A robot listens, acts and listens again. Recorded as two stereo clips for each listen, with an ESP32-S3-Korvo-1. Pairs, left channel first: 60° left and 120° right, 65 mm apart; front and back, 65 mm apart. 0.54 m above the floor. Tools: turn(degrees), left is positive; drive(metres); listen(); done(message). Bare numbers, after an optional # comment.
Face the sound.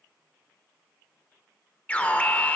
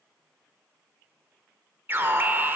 # The alarm: 130° left.
turn(130)
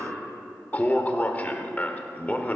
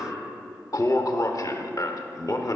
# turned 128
done("Facing the alarm.")